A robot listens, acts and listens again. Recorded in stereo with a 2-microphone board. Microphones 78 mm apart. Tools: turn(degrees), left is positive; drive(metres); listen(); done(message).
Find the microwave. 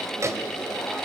turn(degrees=-40)
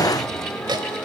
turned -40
turn(degrees=-95)
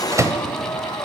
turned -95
turn(degrees=-45)
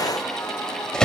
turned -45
turn(degrees=10)
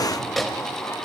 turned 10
done("Facing the microwave.")